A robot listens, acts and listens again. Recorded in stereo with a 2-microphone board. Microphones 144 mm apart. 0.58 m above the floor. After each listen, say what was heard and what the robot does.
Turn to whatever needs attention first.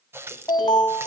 The alarm: about 25° left or 155° left. Turn 25° left.
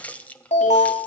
So it is at 125° left. Turn 125° left.
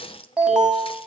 Found it: an alarm, straight ahead, over 4 m away.